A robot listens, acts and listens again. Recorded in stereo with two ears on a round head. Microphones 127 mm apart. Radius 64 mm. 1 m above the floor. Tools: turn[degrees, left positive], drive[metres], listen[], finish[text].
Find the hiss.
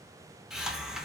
Action: turn[-30]
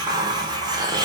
Thought: So it is at 145° right.
Action: turn[-145]
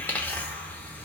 Thought: The hiss is now 15° left.
Action: turn[15]
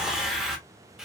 Action: finish[Found it: a hiss, straight ahead, under 1 m away.]